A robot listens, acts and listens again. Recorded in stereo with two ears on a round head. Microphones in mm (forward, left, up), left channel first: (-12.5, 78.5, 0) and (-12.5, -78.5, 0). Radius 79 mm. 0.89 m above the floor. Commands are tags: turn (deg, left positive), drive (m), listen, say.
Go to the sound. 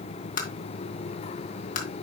<turn deg="50"/>
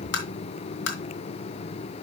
<turn deg="80"/>
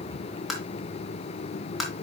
<drive m="1.0"/>
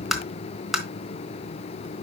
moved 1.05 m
<drive m="1.0"/>
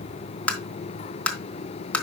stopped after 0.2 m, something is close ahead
<say>I am next to the tapping.</say>